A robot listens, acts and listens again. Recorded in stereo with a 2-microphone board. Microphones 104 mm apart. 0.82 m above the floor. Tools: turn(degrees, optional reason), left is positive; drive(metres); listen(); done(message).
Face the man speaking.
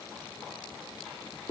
listen()
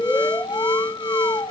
listen()
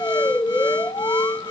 done("I can't make out a man speaking, only an alarm.")